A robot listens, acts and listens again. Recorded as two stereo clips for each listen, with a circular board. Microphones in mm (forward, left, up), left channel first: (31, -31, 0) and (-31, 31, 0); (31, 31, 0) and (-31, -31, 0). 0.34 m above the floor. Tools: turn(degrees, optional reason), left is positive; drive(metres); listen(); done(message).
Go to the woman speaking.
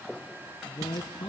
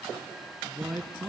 turn(degrees=-45, reason="The woman speaking: 45° right.")
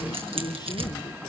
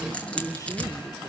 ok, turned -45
drive(metres=1.0)
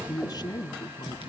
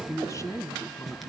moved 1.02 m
drive(metres=1.0)
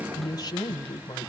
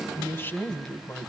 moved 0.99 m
turn(degrees=-15, reason="The woman speaking is now 15° right.")
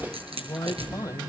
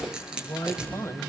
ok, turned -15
drive(metres=1.0)
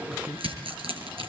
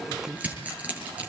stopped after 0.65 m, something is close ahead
listen()
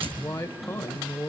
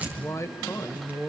turn(degrees=10, reason="The woman speaking is now 10° left.")
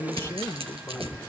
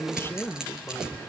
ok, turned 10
done("I am next to the woman speaking.")